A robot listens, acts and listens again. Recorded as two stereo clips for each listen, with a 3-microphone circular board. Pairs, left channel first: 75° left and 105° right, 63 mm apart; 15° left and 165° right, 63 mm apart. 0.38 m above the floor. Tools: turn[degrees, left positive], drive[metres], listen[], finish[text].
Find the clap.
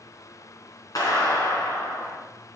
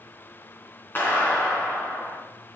Thought: The clap: 70° left.
Action: turn[70]
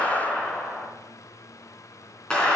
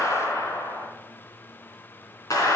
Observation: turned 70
Action: finish[Facing the clap.]